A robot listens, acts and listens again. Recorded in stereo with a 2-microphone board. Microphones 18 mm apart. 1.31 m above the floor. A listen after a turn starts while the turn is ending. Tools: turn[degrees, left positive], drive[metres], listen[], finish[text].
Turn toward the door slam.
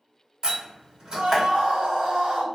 Thought: The door slam: about 40° right or 140° right.
Action: turn[-40]
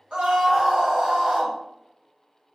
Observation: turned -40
Action: listen[]
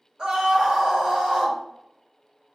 Action: finish[I heard a door slam, but can't make it out now. It was about straight ahead or 100° right.]